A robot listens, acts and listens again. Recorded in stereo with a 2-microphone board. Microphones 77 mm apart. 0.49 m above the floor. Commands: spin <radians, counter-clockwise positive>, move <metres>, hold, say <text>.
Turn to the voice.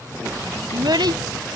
spin -1.13
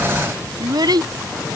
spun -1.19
spin -1.13
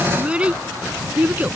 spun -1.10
spin -0.35
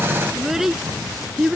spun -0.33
say Facing the child speaking.